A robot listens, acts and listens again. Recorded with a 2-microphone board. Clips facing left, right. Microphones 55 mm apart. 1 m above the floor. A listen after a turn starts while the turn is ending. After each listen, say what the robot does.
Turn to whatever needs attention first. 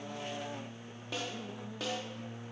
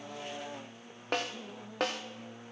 Keep listening.
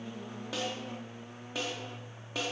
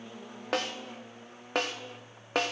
Keep listening.
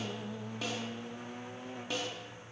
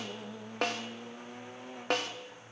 I can't make out anything urgent to turn to.